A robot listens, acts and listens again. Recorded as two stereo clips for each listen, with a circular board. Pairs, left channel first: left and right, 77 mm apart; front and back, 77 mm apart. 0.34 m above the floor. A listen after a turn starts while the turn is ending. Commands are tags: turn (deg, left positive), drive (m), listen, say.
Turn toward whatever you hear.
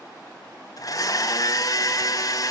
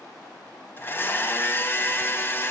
<turn deg="55"/>
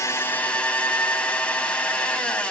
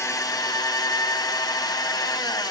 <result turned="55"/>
<turn deg="15"/>
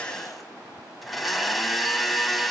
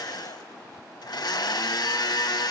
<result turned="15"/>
<say>Found it: a blender, straight ahead.</say>